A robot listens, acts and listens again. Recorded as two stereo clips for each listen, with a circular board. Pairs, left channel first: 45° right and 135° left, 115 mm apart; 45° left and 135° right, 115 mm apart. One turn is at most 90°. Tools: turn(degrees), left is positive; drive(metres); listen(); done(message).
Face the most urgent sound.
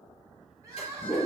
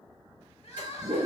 turn(degrees=75)
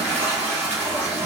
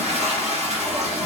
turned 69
listen()
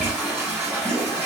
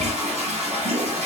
listen()
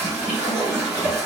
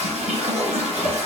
done("I heard crying from this way, but can't make it out now.")